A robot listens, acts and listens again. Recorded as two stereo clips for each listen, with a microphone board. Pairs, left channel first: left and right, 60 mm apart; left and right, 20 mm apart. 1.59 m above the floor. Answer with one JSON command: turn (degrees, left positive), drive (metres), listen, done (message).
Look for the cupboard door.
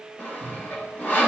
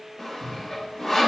{"turn": 45}
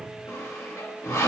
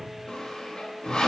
{"listen": true}
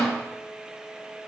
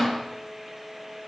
{"listen": true}
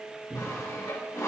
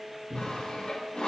{"done": "Facing the cupboard door, 2 to 4 m away."}